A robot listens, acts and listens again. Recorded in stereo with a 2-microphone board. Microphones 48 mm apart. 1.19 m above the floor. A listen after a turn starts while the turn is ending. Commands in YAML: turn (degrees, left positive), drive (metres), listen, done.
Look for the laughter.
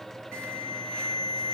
listen: true
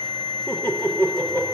turn: 45
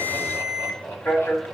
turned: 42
turn: 95
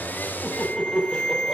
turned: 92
done: "Facing the laughter."